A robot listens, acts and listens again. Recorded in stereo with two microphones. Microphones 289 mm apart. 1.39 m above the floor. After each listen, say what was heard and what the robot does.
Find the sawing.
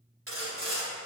The sawing: about 50° right or 130° right. Turn 50° right.
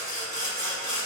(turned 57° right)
So it is at 70° right. Turn 70° right.
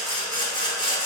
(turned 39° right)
The sawing is now 30° right. Turn 30° right.
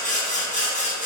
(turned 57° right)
The sawing is now 25° left. Turn 25° left.
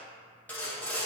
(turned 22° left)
Found it: sawing, straight ahead, 1 to 2 m away.